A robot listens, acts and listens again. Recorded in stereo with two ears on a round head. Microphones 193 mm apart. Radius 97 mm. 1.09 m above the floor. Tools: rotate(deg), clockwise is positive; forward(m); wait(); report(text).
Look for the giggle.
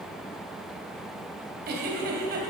rotate(50)
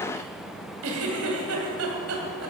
rotate(80)
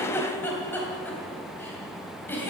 rotate(-10)
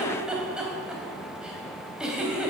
report("Found it: a giggle, straight ahead, 2 to 4 m away.")